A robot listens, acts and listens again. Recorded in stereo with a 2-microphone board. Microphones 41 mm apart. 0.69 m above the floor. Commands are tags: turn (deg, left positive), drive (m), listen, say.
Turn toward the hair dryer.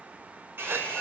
<turn deg="-70"/>
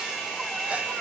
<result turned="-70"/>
<say>Facing the hair dryer, over 4 m away.</say>